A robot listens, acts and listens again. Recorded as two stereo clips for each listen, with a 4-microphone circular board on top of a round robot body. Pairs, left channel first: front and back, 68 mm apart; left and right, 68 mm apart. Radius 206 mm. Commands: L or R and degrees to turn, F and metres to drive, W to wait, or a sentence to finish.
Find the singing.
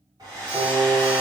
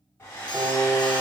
R150
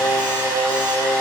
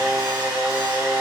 R25
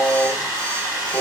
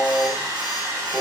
R15
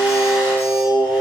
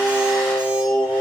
R15
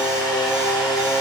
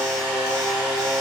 R10
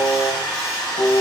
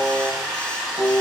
Found it: singing, straight ahead.